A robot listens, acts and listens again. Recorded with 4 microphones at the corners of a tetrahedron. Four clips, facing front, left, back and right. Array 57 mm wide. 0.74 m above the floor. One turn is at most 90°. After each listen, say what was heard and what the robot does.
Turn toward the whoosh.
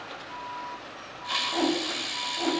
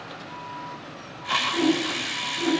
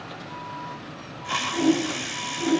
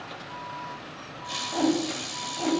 The whoosh: 50° right. Turn 50° right.
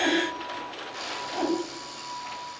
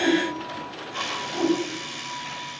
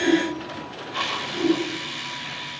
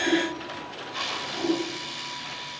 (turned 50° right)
The whoosh is now 15° left. Turn 15° left.
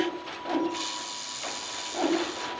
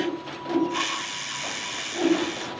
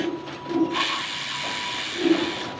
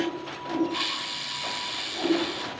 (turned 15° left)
Facing the whoosh, over 4 m away.